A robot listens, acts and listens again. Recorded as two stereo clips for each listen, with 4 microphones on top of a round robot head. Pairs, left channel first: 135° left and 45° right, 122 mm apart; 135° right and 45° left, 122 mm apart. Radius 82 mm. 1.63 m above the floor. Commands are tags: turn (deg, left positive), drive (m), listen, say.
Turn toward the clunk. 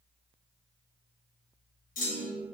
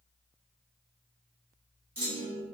<turn deg="125"/>
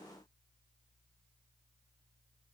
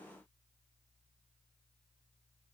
<say>I heard a clunk from this way, but can't make it out now.</say>